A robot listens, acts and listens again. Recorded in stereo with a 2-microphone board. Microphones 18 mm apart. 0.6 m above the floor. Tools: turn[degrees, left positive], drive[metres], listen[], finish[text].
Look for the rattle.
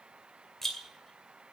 Action: turn[30]
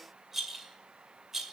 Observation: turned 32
Thought: So it is at 20° right.
Action: turn[-20]
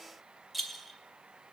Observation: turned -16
Action: finish[Facing the rattle, 2 to 4 m away.]